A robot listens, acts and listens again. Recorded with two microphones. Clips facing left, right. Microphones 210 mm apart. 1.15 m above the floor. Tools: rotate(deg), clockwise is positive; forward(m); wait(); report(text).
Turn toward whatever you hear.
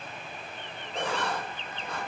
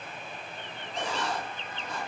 rotate(-60)
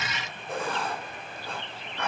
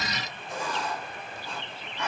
rotate(-60)
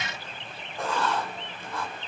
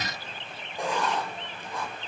rotate(15)
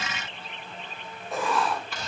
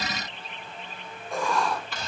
report("Found it: writing, straight ahead, over 4 m away.")